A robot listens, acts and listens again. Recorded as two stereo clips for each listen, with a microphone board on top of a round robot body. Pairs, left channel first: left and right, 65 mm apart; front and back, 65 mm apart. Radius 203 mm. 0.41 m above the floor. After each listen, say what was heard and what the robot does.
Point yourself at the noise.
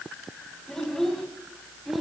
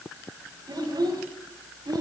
The child speaking: straight behind. Turn 180° left.
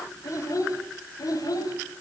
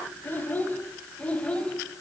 The child speaking is now 75° left. Turn 75° left.
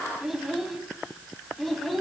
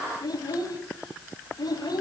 Facing the child speaking, 2 to 4 m away.